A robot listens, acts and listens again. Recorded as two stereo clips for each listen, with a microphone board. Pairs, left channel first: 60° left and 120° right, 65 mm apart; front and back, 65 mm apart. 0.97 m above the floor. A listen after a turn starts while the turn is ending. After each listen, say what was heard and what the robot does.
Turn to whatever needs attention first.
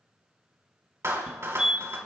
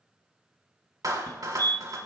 The fire alarm: 45° right. Turn 45° right.
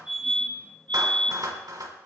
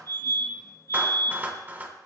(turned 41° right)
Found it: a fire alarm, straight ahead.